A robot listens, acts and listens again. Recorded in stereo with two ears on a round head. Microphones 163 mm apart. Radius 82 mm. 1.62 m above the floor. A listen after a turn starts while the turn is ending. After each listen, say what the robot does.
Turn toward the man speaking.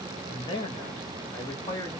Turn 20° left.
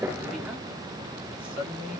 Found it: a man speaking, straight ahead, 2 to 4 m away.